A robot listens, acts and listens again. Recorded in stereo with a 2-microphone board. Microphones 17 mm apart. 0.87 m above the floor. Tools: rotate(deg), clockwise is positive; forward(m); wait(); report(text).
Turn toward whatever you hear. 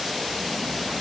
wait()
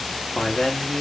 rotate(-55)
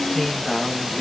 rotate(-35)
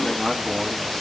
rotate(-20)
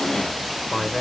rotate(-30)
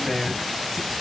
report("Found it: a man speaking, straight ahead.")